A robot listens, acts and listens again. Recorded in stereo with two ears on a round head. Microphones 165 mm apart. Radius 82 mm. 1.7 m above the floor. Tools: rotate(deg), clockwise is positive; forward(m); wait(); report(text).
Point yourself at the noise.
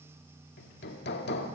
rotate(-55)
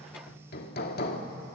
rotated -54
rotate(-60)
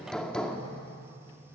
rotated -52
report("Facing the hammering.")